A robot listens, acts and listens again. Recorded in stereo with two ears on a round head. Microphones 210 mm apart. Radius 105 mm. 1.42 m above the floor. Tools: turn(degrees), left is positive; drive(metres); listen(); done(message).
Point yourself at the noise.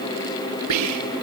turn(degrees=-90)
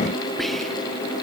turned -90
listen()
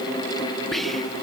done("Facing the whispering.")